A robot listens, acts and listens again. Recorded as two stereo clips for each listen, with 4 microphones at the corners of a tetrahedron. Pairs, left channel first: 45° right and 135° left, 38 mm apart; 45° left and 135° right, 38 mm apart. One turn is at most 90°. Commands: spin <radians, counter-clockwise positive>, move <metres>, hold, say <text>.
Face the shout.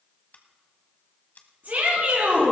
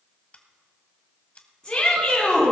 spin 1.57
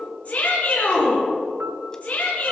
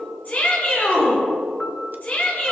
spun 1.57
say Found it: a shout, straight ahead, over 4 m away.